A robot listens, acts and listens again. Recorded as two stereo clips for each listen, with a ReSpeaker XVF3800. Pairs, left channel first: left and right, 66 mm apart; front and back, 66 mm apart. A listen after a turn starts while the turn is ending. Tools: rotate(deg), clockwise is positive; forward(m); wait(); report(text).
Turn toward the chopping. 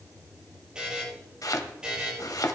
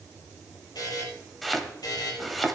rotate(-90)
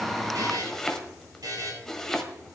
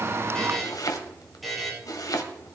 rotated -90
rotate(-10)
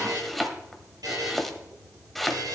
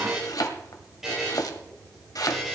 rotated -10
report("Found it: chopping, straight ahead.")